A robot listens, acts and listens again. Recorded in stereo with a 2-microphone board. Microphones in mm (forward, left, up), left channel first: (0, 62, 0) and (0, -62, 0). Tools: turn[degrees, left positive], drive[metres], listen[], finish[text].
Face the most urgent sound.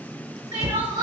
Thought: The crying: about 35° right or 145° right.
Action: turn[-35]
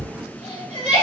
Thought: So it is at 110° right.
Action: turn[-110]
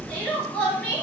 Thought: The crying is now 15° left.
Action: turn[15]
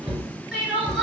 Action: finish[Facing the crying, 1 to 2 m away.]